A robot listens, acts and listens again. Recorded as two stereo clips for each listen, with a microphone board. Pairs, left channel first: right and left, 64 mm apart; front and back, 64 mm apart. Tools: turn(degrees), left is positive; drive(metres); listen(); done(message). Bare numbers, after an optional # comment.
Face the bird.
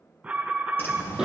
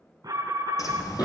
# The bird: 30° right.
turn(-30)
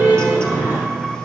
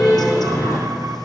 # The bird is now 15° right.
turn(-15)
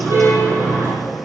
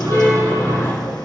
listen()
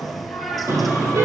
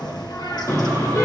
done("Found it: a bird, straight ahead.")